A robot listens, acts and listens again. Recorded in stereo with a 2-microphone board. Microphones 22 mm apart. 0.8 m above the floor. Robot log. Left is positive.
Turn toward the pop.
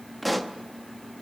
cmd yaw +30
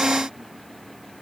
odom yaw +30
cmd idle
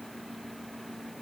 end: I heard a pop, but can't make it out now. It was about 25° right or 145° left.